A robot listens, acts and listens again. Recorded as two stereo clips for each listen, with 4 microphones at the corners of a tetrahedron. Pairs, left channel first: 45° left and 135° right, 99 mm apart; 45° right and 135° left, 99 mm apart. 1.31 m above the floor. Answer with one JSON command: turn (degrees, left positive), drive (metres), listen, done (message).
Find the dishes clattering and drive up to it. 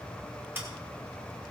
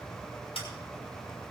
{"listen": true}
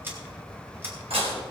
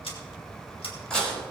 {"turn": -125}
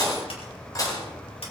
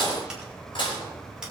{"drive": 1.0}
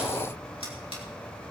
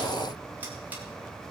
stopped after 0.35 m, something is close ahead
{"listen": true}
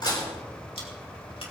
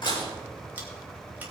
{"done": "Blocked. The dishes clattering is further on, straight ahead."}